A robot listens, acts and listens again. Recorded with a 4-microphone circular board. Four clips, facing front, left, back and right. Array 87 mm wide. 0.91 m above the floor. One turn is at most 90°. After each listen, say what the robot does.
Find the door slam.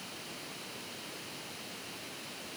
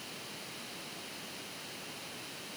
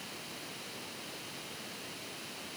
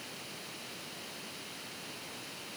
Keep listening.
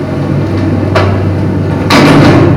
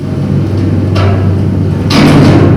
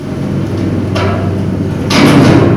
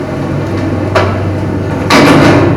Keep listening.
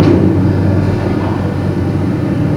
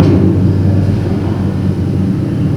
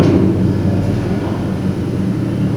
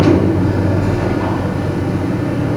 I can't make out a door slam to turn to.